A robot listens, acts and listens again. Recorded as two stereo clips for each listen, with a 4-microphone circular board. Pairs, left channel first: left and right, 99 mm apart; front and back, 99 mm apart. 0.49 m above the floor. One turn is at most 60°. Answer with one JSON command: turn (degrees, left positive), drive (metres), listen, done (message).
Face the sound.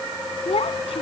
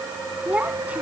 {"turn": 60}
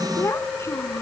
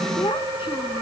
{"turn": 30}
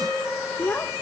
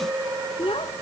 {"turn": 20}
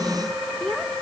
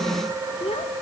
{"done": "Found it: a child speaking, straight ahead."}